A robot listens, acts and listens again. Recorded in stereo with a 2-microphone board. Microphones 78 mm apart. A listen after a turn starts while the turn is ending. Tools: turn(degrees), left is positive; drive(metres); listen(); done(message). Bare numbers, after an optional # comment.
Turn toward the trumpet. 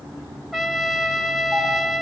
turn(30)
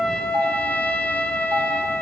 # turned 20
# So it is at 160° left.
turn(160)
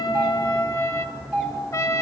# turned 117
# The trumpet is now 45° left.
turn(45)
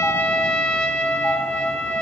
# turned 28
# The trumpet is now 15° left.
turn(15)
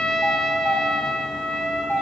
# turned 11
done("Facing the trumpet.")